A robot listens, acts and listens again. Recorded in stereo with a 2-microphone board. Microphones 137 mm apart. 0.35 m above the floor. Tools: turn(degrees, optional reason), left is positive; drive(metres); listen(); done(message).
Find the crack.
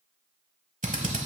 listen()
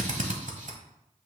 listen()
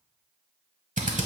done("I can't make out a crack, only a drill.")